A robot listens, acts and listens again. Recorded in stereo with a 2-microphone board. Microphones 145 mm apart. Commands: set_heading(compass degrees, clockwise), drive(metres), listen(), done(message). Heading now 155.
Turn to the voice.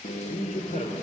set_heading(100)
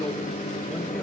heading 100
listen()
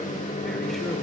listen()
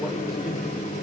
done("Found it: a man speaking, straight ahead, 2 to 4 m away.")